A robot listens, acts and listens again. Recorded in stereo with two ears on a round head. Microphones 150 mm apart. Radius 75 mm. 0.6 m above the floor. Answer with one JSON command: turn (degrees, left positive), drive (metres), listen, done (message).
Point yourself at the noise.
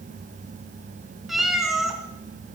{"turn": 30}
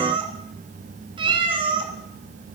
{"turn": -30}
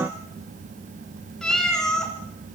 {"done": "Found it: a cat meowing, straight ahead, 2 to 4 m away."}